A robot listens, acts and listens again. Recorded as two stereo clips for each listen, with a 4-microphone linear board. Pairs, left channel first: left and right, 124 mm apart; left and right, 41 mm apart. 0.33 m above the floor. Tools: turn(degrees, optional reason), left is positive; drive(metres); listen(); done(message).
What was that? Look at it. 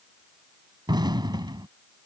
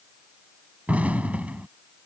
turn(degrees=-35, reason="The explosion: about 35° right or 145° right.")
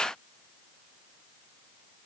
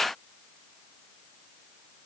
listen()
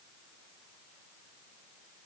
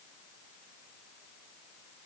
done("I heard an explosion, but can't make it out now. It was about straight ahead or 110° right.")